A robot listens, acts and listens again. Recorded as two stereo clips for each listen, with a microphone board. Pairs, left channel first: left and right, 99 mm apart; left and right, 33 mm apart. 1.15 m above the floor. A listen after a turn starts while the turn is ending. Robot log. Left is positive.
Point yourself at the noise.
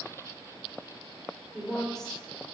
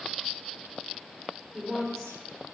cmd yaw +30
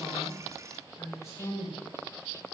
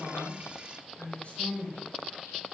note: So it is at 145° left.
cmd yaw +145
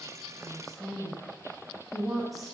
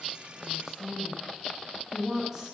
end: Found it: a woman speaking, straight ahead.